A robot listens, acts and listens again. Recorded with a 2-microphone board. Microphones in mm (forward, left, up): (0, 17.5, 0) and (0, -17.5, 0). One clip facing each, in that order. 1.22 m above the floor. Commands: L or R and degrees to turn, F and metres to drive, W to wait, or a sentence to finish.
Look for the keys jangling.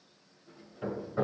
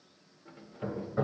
R75
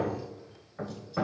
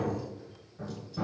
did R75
W
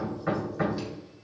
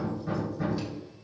W
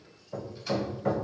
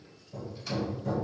I heard keys jangling, but can't make it out now. It was about straight ahead or 30° right.